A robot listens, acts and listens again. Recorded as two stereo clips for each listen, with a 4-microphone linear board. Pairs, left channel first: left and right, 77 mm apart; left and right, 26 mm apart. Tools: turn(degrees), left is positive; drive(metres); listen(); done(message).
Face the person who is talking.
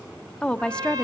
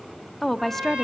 turn(degrees=30)
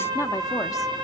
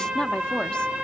listen()
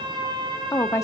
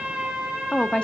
turn(degrees=130)
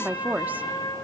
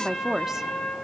turn(degrees=-25)
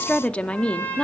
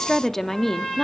turn(degrees=15)
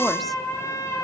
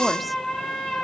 listen()
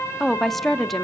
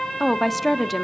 done("Facing the woman speaking.")